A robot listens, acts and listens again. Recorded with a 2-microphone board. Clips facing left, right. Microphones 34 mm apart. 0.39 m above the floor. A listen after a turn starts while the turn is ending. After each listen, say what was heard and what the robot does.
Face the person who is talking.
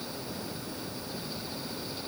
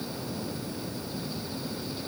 Keep listening.
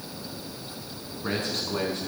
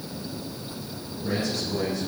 The man speaking: about 55° left or 125° left. Turn 55° left.
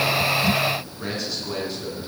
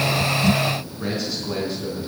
Found it: a man speaking, straight ahead.